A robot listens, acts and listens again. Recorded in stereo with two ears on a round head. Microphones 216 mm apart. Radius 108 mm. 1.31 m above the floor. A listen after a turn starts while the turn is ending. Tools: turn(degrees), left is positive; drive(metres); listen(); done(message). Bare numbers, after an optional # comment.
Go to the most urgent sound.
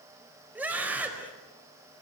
turn(-30)
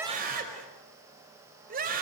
# So it is at 140° right.
turn(-140)
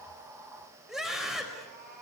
drive(1.0)
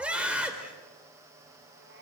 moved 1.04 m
drive(1.0)
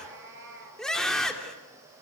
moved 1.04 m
drive(1.0)
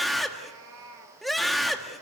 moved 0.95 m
drive(1.0)
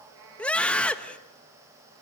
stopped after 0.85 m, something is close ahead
done("I am next to the scream.")